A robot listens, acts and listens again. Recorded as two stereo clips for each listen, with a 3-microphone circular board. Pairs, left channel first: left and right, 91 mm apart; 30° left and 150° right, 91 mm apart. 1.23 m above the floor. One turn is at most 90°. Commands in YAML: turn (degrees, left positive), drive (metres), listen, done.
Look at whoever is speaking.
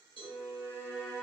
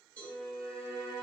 listen: true
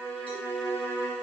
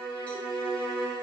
listen: true
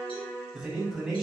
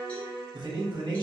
turn: -90
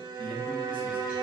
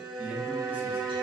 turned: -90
turn: -80
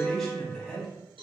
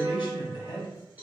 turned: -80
done: "Facing the man speaking."